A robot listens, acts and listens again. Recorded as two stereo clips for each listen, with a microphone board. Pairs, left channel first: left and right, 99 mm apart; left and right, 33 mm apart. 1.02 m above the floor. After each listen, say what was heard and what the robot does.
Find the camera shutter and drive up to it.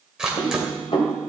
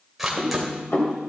Turn 30° right.
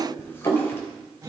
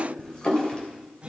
Keep listening.
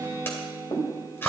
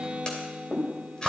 So it is at 25° left. Turn 25° left.
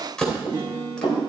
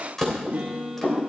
The camera shutter is now 10° left. Turn 10° left.
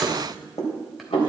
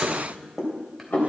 Drive 1.0 m forward.
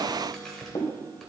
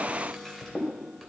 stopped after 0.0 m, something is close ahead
Keep listening.
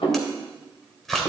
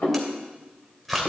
Something is in my way. I am facing the camera shutter but have not reached it.